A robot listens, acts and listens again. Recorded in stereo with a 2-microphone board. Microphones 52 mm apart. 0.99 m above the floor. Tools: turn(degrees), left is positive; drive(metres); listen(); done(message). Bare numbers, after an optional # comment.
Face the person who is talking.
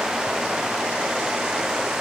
listen()
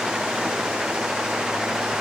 listen()
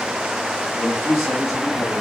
# The man speaking: about 75° left or 105° left.
turn(75)
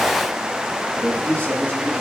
# So it is at 30° left.
turn(30)
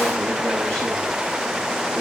listen()
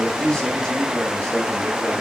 # The man speaking is now 20° left.
turn(20)
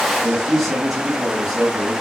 done("Found it: a man speaking, straight ahead.")